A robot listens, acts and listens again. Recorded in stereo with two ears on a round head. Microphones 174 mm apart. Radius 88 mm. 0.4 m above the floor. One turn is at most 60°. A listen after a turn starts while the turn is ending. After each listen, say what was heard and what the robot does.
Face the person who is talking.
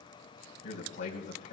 The man speaking: about 40° left or 140° left. Turn 40° left.
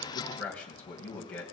So it is at 10° left. Turn 10° left.
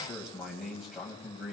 Facing the man speaking, 2 to 4 m away.